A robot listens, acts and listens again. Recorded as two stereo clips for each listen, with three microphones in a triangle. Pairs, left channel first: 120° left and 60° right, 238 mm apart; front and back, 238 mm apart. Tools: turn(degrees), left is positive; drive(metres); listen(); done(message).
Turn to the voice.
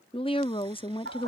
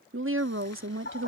turn(degrees=-175)
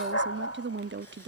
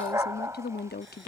turn(degrees=-35)
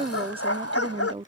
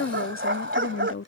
done("Facing the woman speaking.")